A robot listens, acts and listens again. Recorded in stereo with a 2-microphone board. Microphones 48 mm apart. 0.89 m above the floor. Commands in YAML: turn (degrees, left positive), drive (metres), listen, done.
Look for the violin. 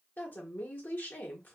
listen: true
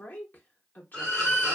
turn: 30
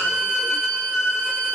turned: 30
turn: -20
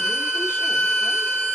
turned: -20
done: "Facing the violin, 1 to 2 m away."